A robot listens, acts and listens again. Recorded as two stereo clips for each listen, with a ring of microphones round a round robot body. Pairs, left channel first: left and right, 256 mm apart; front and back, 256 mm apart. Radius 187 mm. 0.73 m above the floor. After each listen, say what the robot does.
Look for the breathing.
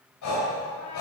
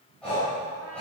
Turn 85° left.
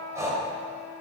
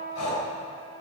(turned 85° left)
Turn 10° right.
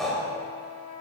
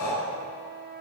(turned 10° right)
Facing the breathing.